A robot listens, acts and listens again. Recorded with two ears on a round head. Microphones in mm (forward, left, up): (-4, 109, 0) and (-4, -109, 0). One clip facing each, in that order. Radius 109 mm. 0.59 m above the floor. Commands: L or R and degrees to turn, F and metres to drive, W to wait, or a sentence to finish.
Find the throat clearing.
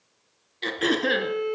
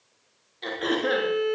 L40
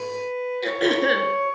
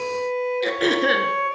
Found it: throat clearing, straight ahead.